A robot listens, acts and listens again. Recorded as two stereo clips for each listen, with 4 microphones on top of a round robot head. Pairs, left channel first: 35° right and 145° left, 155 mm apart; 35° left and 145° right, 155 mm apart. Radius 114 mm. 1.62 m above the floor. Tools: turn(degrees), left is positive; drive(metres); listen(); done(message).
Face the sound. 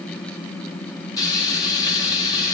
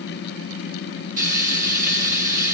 turn(degrees=-105)
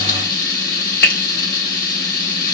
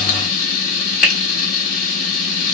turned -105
done("Found it: frying, straight ahead.")